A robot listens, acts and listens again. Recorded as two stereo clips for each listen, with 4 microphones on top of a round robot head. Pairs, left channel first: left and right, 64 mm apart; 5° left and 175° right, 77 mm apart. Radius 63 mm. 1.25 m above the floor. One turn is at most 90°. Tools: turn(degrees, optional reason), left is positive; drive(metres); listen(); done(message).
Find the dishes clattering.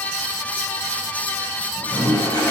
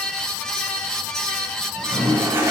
listen()
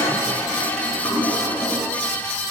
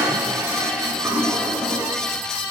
listen()
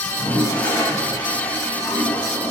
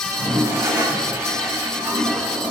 done("I can't make out dishes clattering, only a toilet flushing.")